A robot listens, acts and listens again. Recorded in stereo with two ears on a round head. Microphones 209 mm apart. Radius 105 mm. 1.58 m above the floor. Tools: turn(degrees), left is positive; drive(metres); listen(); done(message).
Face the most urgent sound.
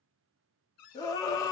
turn(degrees=15)
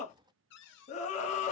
turn(degrees=150)
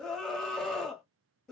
done("Facing the scream.")